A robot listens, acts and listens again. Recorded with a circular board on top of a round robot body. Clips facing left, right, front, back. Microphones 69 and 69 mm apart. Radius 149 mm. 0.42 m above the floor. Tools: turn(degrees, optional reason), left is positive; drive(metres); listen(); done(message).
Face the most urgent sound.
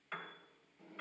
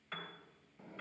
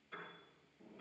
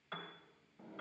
listen()
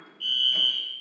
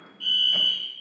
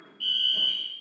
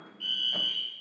turn(degrees=-115, reason="The fire alarm: 115° right.")
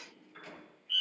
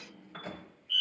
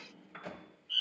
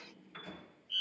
done("Facing the fire alarm, 2 to 4 m away.")